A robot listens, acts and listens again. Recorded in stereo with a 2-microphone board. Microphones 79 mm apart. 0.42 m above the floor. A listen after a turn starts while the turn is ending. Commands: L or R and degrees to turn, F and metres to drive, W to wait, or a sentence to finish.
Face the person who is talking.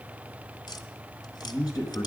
L55
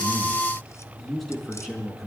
Facing the man speaking, over 4 m away.